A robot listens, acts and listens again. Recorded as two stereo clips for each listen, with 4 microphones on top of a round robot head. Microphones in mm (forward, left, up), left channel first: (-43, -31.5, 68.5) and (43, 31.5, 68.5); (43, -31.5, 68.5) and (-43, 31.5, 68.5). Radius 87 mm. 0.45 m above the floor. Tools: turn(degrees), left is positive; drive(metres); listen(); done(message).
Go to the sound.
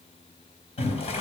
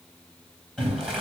turn(degrees=-125)
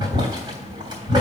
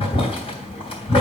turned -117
drive(metres=1.0)
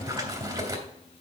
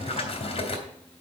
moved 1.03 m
turn(degrees=-15)
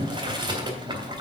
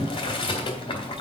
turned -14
drive(metres=1.0)
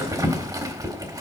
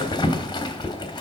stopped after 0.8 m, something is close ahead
done("Arrived at the boiling, straight ahead.")